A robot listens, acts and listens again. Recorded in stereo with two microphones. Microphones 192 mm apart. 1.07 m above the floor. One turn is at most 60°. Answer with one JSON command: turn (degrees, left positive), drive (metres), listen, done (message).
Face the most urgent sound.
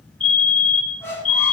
{"turn": -30}
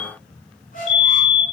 {"done": "Facing the fire alarm."}